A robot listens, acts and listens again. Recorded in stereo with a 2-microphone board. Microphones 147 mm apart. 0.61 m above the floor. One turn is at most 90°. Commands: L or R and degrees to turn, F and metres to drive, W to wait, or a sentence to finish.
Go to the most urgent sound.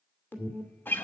L30
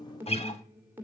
R15
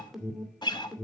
F1.0
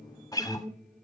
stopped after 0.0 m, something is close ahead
Something is in my way. I am facing the alarm but have not reached it.